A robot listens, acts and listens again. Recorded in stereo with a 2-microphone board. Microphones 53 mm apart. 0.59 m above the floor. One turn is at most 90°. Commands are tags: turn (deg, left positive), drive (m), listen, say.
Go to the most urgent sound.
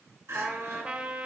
<turn deg="-55"/>
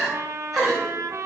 <drive m="1.0"/>
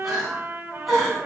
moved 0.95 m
<drive m="1.0"/>
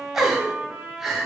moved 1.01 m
<turn deg="-10"/>
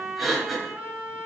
<drive m="1.0"/>
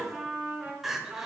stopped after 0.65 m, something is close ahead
<say>Arrived at the crying, straight ahead.</say>